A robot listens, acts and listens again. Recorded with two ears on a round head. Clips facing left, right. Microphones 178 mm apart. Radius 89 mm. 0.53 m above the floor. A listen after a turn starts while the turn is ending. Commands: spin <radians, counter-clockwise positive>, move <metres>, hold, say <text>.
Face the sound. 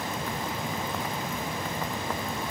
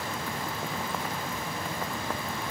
hold
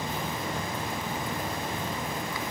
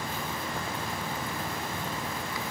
hold
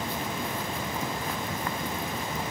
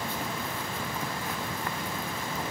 say I can't make out anything.